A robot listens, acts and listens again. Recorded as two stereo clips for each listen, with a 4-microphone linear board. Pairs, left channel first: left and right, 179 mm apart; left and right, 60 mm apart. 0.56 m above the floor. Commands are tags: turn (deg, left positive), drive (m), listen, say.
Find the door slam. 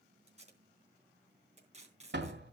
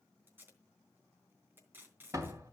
<turn deg="-90"/>
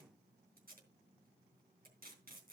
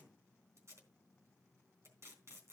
<say>Facing where the door slam came from. I can't hear it now.</say>